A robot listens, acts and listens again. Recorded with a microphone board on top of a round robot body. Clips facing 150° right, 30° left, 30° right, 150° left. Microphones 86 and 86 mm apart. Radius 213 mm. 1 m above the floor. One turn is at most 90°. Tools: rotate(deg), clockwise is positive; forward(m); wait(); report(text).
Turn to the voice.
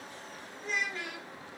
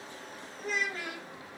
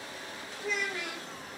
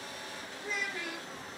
rotate(15)
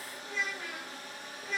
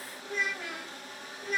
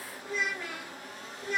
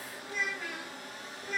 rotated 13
report("Facing the child speaking.")